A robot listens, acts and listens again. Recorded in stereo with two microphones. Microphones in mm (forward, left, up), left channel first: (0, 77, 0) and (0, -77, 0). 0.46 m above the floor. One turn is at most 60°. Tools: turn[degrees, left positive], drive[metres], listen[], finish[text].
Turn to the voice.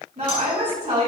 Thought: The woman speaking: about 50° right or 130° right.
Action: turn[-50]
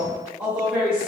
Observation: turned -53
Thought: So it is at 10° right.
Action: turn[-10]
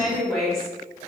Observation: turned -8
Action: finish[Facing the woman speaking.]